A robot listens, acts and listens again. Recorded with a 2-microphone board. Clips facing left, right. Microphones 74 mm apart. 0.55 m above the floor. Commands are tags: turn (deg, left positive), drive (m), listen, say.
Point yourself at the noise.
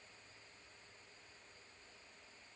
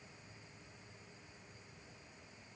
<listen/>
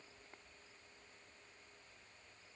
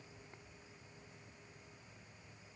<listen/>
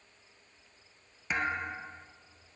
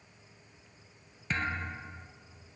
<turn deg="30"/>
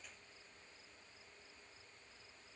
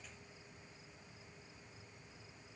<listen/>
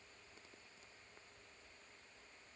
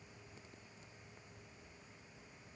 <say>I heard a thud, but can't make it out now. It was about 20° right or 140° left.</say>